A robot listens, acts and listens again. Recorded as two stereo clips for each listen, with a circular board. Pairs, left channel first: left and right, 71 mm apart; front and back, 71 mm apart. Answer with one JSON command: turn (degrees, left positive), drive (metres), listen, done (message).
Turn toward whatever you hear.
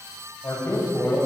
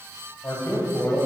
{"turn": 45}
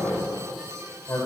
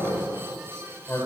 {"turn": 45}
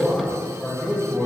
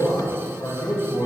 {"turn": 15}
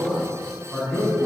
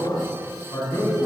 {"done": "Found it: a man speaking, straight ahead, 2 to 4 m away."}